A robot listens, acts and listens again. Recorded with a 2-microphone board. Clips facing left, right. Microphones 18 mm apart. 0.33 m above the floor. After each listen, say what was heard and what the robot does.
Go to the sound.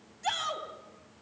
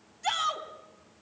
Turn 30° left.
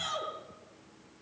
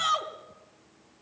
So it is at 25° right. Turn 25° right.
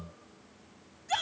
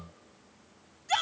Drive 1.0 m forward.
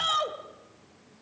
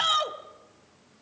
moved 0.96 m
The shout is now 15° right. Turn 15° right.
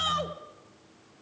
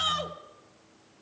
Drive 1.0 m forward.
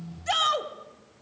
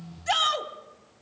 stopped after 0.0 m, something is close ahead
I am next to the shout.